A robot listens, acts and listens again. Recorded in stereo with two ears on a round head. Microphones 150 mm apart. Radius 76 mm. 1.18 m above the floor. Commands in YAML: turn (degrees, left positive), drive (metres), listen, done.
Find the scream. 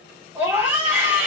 turn: -30
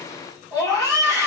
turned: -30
turn: 20
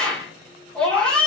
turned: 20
done: "Found it: a scream, straight ahead."